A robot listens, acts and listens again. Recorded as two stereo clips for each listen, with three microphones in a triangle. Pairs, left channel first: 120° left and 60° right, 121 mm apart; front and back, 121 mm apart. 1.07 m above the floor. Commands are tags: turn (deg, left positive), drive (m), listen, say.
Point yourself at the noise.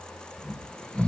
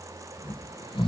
<turn deg="40"/>
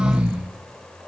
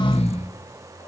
<turn deg="20"/>
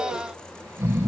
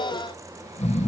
<say>Facing the snoring, 1 to 2 m away.</say>